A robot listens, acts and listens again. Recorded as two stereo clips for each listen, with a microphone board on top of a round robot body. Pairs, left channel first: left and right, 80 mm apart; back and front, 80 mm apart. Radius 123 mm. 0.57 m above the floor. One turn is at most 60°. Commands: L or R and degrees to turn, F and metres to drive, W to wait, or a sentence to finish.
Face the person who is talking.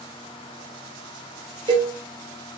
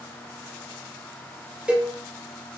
W
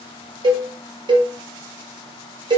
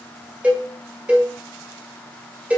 W
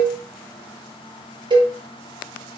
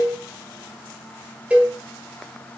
I can't make out anyone speaking, only a cowbell.